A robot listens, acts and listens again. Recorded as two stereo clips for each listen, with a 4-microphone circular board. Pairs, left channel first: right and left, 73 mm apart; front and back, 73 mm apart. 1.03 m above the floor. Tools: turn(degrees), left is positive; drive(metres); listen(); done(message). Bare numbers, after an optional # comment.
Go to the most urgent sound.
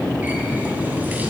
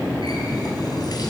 listen()
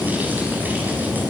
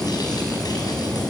listen()
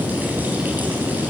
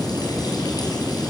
done("I can't make out anything urgent to turn to.")